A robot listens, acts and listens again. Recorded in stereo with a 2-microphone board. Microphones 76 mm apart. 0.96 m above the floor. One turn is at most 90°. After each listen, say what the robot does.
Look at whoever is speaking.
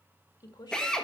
Turn 70° left.
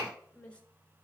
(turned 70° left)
Turn 20° left.
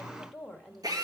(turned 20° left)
Facing the woman speaking.